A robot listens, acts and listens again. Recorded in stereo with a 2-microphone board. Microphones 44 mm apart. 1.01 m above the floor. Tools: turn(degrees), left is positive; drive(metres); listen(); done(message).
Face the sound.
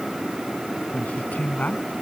turn(degrees=45)
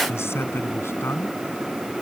turn(degrees=90)
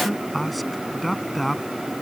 done("Facing the man speaking.")